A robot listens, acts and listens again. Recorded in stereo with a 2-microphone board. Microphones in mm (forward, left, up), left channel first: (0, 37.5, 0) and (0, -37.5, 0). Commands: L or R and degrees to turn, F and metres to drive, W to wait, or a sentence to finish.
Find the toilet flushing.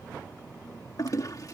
L50
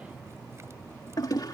L70
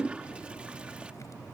R20
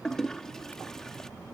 Facing the toilet flushing.